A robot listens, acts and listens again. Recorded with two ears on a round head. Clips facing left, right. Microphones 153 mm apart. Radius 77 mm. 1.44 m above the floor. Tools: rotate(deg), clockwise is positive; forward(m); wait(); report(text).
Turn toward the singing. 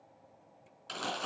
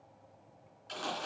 wait()
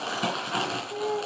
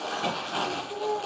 rotate(-20)
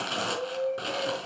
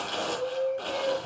rotate(-30)
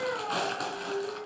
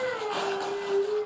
rotate(15)
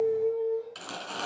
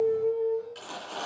report("Facing the singing.")